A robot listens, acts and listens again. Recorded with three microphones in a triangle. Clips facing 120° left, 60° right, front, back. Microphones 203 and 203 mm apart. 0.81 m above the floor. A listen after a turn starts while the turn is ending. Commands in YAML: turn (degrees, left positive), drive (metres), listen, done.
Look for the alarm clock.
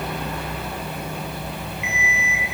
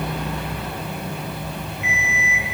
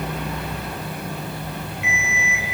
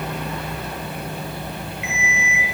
turn: -30
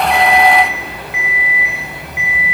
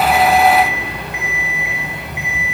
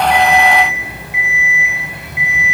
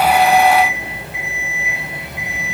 done: "Found it: an alarm clock, straight ahead, 1 to 2 m away."